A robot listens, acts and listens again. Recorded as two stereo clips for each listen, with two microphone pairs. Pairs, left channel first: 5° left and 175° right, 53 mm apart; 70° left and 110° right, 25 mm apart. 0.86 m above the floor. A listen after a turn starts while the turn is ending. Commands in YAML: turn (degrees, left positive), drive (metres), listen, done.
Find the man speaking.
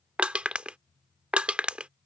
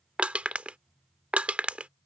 listen: true
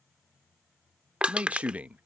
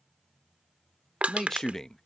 turn: 130
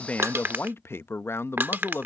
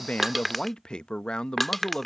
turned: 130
turn: 25
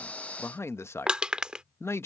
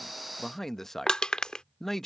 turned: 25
done: "Facing the man speaking."